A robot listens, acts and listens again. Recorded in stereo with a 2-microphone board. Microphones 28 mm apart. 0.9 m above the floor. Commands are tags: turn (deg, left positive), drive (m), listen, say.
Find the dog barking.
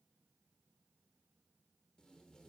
<listen/>
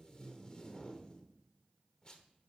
<listen/>
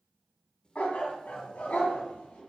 <turn deg="75"/>
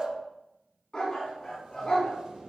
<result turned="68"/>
<turn deg="30"/>
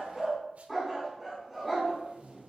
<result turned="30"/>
<say>Facing the dog barking, 2 to 4 m away.</say>